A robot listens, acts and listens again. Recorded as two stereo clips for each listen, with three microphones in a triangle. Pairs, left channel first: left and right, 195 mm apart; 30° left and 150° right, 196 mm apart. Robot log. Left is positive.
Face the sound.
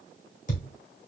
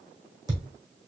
note: The thud: 140° left.
cmd yaw +140
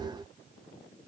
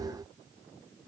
end: Facing where the thud came from. I can't hear it now.